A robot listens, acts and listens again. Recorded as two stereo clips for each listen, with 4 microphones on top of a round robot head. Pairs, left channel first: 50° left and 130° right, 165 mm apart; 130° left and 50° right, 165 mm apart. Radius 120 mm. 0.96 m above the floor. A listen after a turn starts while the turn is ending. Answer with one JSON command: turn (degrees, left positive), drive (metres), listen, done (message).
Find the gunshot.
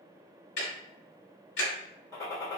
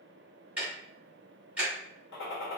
{"turn": 120}
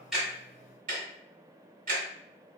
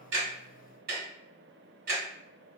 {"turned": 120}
{"done": "I heard a gunshot from this way, but can't make it out now."}